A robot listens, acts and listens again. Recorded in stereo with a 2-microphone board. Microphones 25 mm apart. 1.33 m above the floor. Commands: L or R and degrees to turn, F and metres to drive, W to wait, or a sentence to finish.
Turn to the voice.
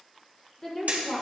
L25
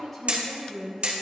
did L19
Found it: a woman speaking, straight ahead, 1 to 2 m away.